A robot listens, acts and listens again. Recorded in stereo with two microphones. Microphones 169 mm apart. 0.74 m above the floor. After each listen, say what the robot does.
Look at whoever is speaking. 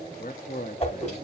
Turn 55° left.
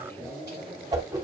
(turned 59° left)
Keep listening.
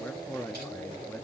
Turn 15° left.
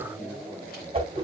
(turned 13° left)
Keep listening.
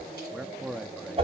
Found it: a man speaking, straight ahead, under 1 m away.